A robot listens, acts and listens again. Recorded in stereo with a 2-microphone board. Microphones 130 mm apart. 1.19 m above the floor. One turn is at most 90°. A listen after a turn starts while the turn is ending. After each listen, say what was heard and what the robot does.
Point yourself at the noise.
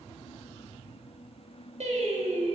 The singing: about 70° right or 110° right. Turn 70° right.
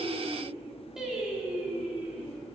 So it is at 10° right. Turn 10° right.
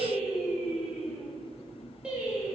The singing is now 10° right. Turn 10° right.
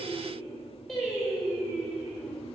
Facing the singing.